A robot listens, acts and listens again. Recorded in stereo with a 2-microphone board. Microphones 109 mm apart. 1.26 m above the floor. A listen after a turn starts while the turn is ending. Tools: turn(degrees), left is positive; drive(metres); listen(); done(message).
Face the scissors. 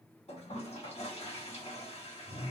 listen()
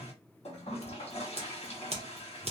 turn(degrees=-70)
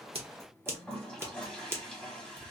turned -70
turn(degrees=-25)
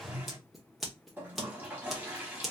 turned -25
done("Found it: scissors, straight ahead, under 1 m away.")